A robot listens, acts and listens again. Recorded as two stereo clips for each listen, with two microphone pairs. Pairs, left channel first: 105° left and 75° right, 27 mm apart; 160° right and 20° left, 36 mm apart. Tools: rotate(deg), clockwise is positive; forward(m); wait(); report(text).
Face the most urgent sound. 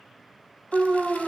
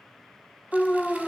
rotate(95)
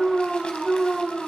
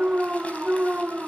rotate(10)
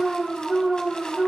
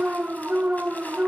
report("Found it: an alarm, straight ahead, 1 to 2 m away.")